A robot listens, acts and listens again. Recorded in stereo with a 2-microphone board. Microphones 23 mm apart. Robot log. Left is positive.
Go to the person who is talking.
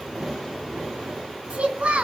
note: The child speaking: about 70° right or 110° right.
cmd yaw -70
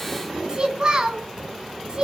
note: So it is at 35° right.
cmd yaw -35
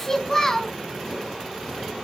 note: The child speaking is now 20° left.
cmd yaw +20
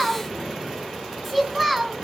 cmd fwd 1.0
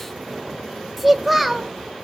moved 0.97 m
cmd fwd 1.0
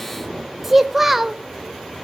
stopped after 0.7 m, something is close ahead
note: The child speaking is now 10° right.
cmd yaw -10
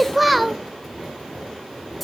end: Arrived at the child speaking, straight ahead.